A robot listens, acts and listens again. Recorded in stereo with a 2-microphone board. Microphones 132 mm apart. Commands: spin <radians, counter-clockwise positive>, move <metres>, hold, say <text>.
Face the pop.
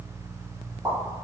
spin -0.44
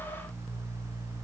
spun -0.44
hold
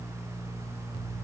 say I heard a pop, but can't make it out now. It was about straight ahead or 130° right.